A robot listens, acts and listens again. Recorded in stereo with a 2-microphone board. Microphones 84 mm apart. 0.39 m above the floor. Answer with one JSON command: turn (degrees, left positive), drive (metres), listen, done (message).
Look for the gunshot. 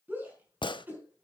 {"turn": 75}
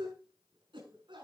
{"listen": true}
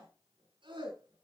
{"done": "I heard a gunshot, but can't make it out now. It was about straight ahead or 30° left."}